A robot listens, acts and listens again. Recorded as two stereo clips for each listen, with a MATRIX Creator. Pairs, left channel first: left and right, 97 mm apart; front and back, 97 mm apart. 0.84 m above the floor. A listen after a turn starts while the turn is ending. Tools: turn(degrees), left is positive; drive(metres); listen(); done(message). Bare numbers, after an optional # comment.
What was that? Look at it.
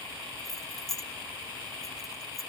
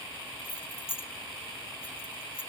done("Found it: keys jangling, straight ahead.")